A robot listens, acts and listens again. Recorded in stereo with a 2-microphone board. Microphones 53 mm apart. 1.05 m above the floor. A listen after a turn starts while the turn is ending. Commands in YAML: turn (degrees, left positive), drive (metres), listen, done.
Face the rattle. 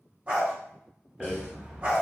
turn: -30
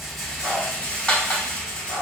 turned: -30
turn: 25
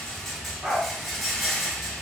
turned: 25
done: "Found it: a rattle, straight ahead."